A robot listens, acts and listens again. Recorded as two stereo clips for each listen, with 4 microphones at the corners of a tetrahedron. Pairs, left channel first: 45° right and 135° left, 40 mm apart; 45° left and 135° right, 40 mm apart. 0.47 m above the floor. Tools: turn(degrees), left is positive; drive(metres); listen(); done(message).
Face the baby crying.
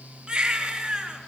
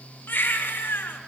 turn(degrees=65)
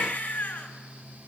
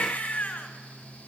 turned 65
turn(degrees=-10)
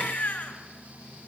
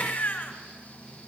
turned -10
done("Facing the baby crying.")